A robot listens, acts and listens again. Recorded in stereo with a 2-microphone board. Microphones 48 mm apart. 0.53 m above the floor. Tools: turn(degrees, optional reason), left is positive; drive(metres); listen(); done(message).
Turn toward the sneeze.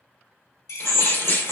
turn(degrees=45, reason="The sneeze: about 45° left or 135° left.")
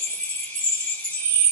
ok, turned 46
listen()
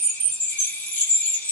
done("I heard a sneeze, but can't make it out now. It was about straight ahead or 85° left.")